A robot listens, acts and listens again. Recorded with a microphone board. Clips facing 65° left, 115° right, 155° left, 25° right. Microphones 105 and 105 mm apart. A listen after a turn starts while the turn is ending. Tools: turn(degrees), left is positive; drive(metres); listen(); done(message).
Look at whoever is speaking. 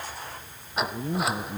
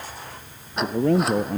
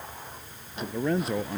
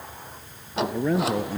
turn(degrees=-110)
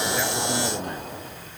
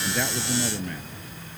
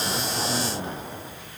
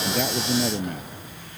done("Facing the man speaking.")